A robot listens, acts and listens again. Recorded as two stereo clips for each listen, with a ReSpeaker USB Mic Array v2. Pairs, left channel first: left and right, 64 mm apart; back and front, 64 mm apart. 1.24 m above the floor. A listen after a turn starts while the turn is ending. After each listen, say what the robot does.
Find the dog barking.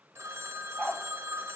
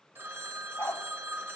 Turn 155° left.
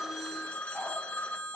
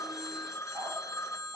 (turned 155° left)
Facing the dog barking.